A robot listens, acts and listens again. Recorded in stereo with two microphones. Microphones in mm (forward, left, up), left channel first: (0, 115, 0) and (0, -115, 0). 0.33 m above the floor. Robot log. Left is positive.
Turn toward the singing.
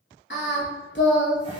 note: The singing: about 55° left or 125° left.
cmd yaw +55
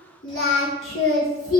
note: So it is at 65° left.
cmd yaw +65
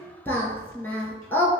note: The singing is now 10° left.
cmd yaw +10
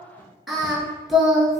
end: Found it: singing, straight ahead.